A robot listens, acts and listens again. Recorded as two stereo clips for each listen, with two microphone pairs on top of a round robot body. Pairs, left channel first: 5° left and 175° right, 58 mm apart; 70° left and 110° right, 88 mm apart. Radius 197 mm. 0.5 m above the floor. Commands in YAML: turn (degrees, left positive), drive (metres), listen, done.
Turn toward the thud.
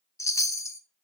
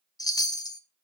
listen: true
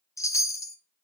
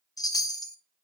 listen: true
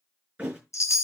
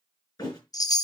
turn: 115
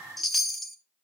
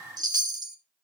done: "Facing where the thud came from. I can't hear it now."